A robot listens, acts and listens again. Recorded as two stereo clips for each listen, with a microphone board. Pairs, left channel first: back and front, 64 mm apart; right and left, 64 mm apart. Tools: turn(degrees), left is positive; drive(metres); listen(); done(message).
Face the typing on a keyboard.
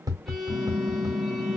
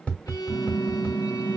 turn(degrees=-125)
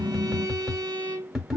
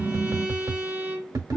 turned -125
turn(degrees=-20)
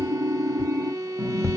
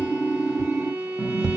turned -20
done("Found it: typing on a keyboard, straight ahead, 1 to 2 m away.")